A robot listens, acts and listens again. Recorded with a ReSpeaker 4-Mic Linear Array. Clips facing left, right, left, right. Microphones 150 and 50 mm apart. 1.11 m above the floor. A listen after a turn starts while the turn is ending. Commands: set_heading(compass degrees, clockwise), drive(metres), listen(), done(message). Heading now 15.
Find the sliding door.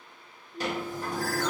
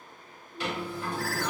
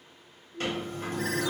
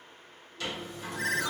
set_heading(335)
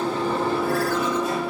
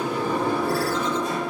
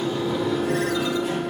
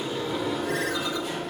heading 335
done("Found it: a sliding door, straight ahead.")